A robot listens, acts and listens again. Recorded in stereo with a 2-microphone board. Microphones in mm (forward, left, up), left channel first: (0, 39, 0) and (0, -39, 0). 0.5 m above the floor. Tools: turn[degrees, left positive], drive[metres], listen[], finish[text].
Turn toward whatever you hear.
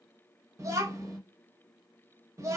Thought: The child speaking: about 40° right or 140° right.
Action: turn[-40]
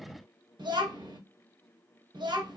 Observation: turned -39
Thought: So it is at 100° right.
Action: turn[-100]
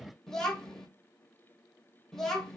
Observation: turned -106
Action: finish[Found it: a child speaking, straight ahead, under 1 m away.]